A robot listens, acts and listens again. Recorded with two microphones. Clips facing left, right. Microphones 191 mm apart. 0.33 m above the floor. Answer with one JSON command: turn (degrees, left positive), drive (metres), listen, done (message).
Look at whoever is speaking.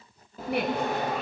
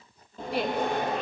{"turn": 60}
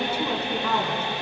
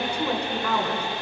{"done": "Facing the woman speaking, 2 to 4 m away."}